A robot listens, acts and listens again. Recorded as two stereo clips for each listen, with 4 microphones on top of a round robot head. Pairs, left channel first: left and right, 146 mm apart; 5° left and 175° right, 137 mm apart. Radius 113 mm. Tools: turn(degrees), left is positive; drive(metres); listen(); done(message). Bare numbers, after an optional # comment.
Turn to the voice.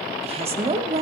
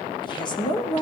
# The woman speaking: 50° right.
turn(-50)
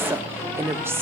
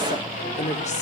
# The woman speaking is now 20° right.
turn(-20)
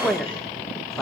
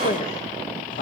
done("Found it: a woman speaking, straight ahead, 1 to 2 m away.")